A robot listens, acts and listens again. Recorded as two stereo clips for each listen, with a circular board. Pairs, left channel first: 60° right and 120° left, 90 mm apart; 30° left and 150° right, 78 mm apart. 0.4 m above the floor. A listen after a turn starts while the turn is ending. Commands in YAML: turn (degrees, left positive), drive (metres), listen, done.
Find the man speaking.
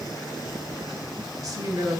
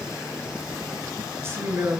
turn: 165
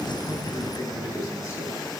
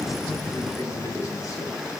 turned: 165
turn: -15
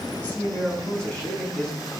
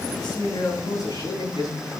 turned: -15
turn: 15
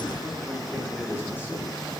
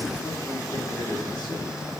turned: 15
done: "Facing the man speaking."